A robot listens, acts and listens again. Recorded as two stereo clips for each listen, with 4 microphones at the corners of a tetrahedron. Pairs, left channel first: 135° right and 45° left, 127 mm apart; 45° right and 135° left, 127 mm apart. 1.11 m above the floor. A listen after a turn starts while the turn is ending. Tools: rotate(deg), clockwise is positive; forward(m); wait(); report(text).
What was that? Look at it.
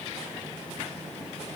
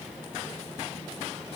wait()
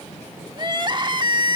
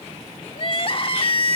report("Found it: crying, straight ahead.")